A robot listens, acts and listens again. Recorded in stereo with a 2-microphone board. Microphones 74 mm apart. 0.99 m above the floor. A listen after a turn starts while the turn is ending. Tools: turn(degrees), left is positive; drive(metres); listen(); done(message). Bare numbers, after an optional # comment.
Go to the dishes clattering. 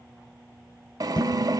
turn(90)
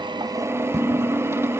drive(1.0)
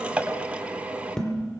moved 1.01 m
# The dishes clattering is now 10° left.
turn(10)
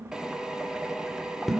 drive(1.0)
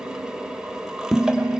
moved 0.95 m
drive(1.0)
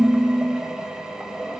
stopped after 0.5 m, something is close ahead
done("Arrived at the dishes clattering, straight ahead.")